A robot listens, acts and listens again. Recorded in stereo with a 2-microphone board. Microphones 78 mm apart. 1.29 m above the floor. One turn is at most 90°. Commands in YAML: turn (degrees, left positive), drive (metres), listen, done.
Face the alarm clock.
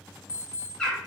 turn: 45
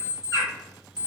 turn: 75
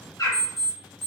done: "Found it: an alarm clock, straight ahead."